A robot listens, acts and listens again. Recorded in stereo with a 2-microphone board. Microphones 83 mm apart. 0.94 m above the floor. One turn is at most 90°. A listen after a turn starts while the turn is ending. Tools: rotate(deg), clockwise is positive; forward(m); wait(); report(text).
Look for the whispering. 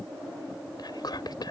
rotate(-55)
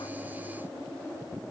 wait()
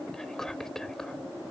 report("Found it: whispering, straight ahead.")